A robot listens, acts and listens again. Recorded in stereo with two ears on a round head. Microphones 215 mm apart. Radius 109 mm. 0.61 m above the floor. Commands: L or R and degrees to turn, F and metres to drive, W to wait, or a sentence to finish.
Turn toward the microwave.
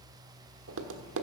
W
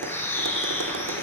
W
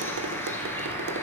I can't make out a microwave, only a bird and tapping.